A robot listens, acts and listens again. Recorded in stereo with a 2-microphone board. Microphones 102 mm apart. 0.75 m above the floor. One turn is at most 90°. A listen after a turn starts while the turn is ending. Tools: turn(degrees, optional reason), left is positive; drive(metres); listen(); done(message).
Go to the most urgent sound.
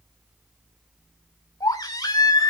turn(degrees=40, reason="The baby crying: about 40° left or 140° left.")
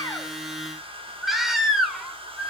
drive(metres=1.0)
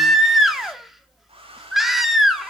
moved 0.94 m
drive(metres=1.0)
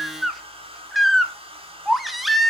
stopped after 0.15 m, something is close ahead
done("Arrived at the baby crying, straight ahead.")